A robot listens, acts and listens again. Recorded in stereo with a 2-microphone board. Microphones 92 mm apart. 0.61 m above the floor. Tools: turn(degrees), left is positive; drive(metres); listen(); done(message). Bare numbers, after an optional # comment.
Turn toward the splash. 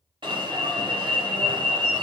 listen()
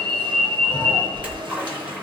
turn(-30)
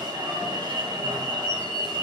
listen()
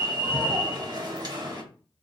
done("I heard a splash, but can't make it out now. It was about 15° left or 135° right.")